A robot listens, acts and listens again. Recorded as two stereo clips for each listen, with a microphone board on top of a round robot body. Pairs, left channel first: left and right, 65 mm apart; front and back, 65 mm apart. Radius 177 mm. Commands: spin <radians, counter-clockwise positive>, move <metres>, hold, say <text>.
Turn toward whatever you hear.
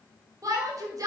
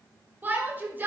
spin -2.09
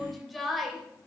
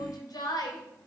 say Found it: a shout, straight ahead, 2 to 4 m away.